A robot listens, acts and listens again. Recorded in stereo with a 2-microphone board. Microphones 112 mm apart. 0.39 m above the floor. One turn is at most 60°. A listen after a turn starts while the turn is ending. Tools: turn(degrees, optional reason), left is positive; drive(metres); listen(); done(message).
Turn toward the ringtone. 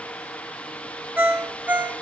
turn(degrees=-15, reason="The ringtone: about 15° right or 165° right.")
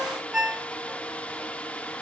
done("Found it: a ringtone, straight ahead.")